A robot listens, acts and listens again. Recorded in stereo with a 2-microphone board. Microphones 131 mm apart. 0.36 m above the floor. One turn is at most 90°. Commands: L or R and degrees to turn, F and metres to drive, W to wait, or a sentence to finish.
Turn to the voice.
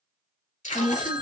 L40
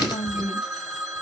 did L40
L85
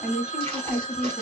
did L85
Facing the woman speaking.